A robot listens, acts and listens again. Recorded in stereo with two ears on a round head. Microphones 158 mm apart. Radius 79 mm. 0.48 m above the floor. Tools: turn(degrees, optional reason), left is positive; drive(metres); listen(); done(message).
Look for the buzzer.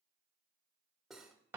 listen()
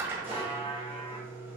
turn(degrees=30, reason="The buzzer: about 30° left or 150° left.")
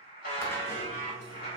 turn(degrees=120, reason="So it is at 120° left.")
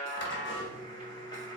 turn(degrees=30, reason="The buzzer is now 30° left.")
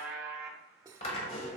done("Facing the buzzer.")